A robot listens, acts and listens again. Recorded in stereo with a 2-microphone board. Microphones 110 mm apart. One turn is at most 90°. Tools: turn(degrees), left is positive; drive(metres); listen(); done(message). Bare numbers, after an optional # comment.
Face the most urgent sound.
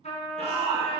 # The shout: about 60° right or 120° right.
turn(-60)
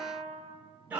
# So it is at 15° right.
turn(-15)
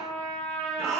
done("Found it: a shout, straight ahead, 2 to 4 m away.")